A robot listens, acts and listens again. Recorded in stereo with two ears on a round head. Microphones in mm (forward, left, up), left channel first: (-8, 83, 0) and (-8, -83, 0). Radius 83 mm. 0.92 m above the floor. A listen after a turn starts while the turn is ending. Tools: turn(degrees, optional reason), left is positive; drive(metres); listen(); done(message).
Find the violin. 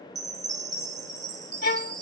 turn(degrees=55, reason="The violin: about 55° left or 125° left.")
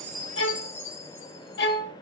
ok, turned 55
turn(degrees=65, reason="So it is at 65° left.")
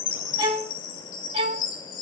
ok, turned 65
turn(degrees=-35, reason="The violin is now 35° right.")
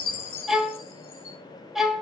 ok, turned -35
done("Found it: a violin, straight ahead.")